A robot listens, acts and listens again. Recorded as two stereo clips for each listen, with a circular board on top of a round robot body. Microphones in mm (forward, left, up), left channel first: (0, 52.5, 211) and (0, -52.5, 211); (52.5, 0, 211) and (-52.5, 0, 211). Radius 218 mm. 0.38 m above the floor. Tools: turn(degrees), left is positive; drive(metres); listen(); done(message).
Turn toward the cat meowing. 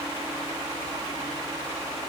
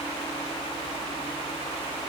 listen()
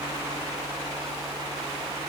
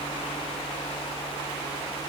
listen()
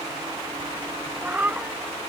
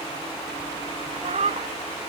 turn(degrees=-165)
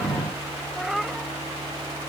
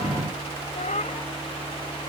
done("Facing the cat meowing.")